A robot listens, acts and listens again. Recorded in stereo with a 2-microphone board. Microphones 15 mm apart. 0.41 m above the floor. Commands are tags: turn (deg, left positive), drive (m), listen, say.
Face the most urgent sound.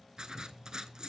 <listen/>
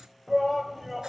<turn deg="-30"/>
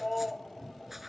<turn deg="20"/>
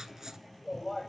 <say>Found it: a shout, straight ahead.</say>